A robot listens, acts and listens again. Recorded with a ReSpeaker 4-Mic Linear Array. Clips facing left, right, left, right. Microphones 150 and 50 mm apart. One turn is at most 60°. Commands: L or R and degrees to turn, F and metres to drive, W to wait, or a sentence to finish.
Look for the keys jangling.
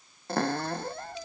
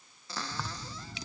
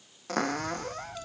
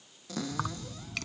R60
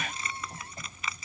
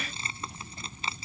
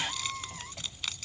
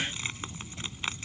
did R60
R30
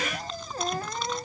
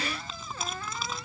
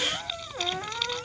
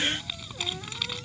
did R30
Facing the keys jangling.